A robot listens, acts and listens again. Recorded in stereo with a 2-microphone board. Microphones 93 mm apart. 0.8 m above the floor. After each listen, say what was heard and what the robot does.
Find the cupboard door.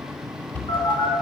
The cupboard door: about 15° left or 165° left. Turn 15° left.
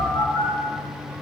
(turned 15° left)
Keep listening.
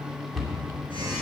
Facing the cupboard door.